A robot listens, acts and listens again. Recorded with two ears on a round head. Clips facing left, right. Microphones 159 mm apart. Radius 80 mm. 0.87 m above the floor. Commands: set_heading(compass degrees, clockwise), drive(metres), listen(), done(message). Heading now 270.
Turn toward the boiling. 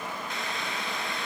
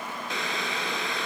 set_heading(335)
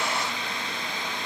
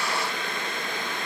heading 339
set_heading(24)
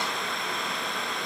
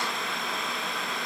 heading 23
done("Found it: boiling, straight ahead, 2 to 4 m away.")